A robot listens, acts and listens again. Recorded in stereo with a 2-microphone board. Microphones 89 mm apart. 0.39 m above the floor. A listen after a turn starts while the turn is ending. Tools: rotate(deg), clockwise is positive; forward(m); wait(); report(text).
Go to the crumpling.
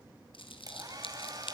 rotate(-70)
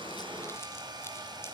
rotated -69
wait()
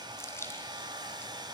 rotate(-30)
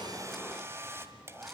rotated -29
wait()
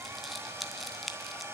forward(1.0)
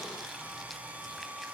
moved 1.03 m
wait()
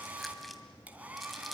wait()
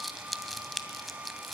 forward(1.0)
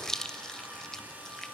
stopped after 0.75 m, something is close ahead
rotate(-10)
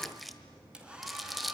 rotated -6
report("Arrived at the crumpling, straight ahead.")